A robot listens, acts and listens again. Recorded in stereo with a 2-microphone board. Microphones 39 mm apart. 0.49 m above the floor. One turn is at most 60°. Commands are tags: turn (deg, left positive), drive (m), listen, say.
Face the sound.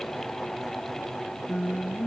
<turn deg="30"/>
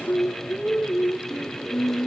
<turn deg="60"/>
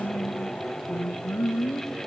<turn deg="60"/>
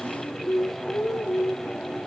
<turn deg="25"/>
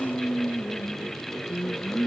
<say>Facing the singing.</say>